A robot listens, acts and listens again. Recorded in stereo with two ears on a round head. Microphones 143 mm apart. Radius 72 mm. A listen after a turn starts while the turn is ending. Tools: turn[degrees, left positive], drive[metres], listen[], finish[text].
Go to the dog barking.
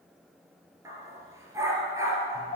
Thought: The dog barking: about 20° right or 160° right.
Action: turn[-20]
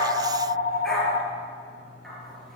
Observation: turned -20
Action: drive[1.0]
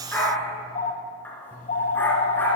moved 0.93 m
Thought: The dog barking is now 10° left.
Action: turn[10]
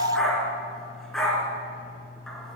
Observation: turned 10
Action: drive[1.0]
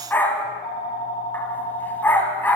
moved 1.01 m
Thought: The dog barking is now 10° left.
Action: turn[10]
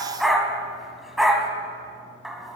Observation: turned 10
Action: drive[1.0]
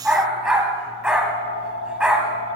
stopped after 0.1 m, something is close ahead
Action: finish[I am next to the dog barking.]